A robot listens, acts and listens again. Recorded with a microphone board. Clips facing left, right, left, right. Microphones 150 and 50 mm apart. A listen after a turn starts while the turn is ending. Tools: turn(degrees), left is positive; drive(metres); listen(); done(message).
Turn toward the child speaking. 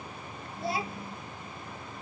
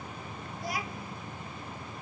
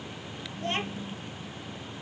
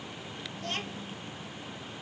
turn(degrees=25)
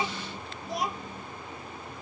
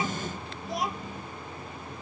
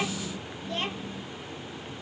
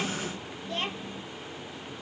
done("Found it: a child speaking, straight ahead.")